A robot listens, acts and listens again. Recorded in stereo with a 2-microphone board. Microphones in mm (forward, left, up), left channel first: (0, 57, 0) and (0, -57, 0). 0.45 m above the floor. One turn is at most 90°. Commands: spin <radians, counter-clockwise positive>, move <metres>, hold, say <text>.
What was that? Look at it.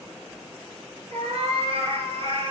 spin -0.96
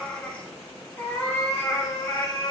spin 0.70
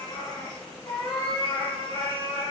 spin 0.87
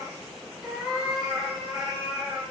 say Facing the cat meowing.